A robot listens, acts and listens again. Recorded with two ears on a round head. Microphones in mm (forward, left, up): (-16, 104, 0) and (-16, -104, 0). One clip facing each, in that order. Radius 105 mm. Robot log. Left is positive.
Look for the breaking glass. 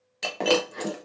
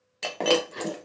cmd yaw +30
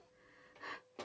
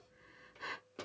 cmd idle
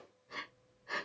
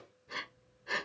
end: I heard breaking glass, but can't make it out now. It was about 30° right or 150° left.